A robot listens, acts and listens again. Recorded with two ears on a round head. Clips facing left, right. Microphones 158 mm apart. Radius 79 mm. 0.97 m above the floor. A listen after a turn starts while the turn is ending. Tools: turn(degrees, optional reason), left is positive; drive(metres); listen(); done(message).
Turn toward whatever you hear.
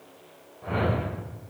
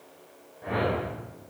turn(degrees=-30)
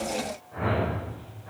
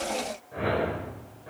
turn(degrees=-135, reason="So it is at 135° right.")
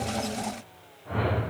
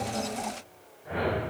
turn(degrees=-15, reason="The whoosh is now 15° right.")
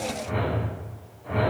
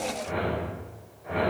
done("Found it: a whoosh, straight ahead, over 4 m away.")